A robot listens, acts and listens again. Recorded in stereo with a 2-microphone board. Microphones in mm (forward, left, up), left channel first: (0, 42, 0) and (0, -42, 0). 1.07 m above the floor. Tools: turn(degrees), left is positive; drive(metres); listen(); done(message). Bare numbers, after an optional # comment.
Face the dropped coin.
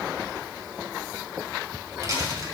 # The dropped coin: about 45° right or 135° right.
turn(-45)
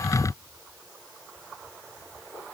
listen()
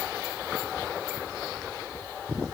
done("I heard a dropped coin, but can't make it out now. It was about straight ahead or 90° right.")